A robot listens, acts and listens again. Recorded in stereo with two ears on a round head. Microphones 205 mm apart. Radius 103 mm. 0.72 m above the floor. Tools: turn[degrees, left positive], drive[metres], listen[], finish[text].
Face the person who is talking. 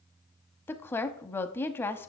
Action: turn[30]
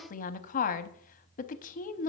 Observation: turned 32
Thought: So it is at 135° left.
Action: turn[135]
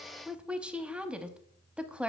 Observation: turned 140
Action: finish[Found it: a woman speaking, straight ahead, under 1 m away.]